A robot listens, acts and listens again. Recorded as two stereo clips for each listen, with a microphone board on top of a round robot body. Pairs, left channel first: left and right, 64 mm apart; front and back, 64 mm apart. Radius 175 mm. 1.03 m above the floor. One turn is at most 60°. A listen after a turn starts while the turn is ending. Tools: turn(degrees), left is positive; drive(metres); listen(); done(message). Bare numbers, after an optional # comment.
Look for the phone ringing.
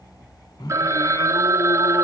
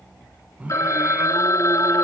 # The phone ringing: 45° right.
turn(-45)
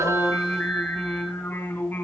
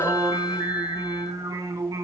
listen()
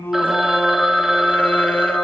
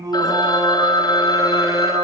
done("Found it: a phone ringing, straight ahead, 1 to 2 m away.")